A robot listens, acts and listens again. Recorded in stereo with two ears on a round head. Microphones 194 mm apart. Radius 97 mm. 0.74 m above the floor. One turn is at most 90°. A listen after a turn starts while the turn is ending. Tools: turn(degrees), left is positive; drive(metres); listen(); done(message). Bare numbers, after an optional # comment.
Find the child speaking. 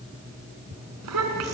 turn(-90)
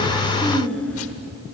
done("Facing the child speaking, over 4 m away.")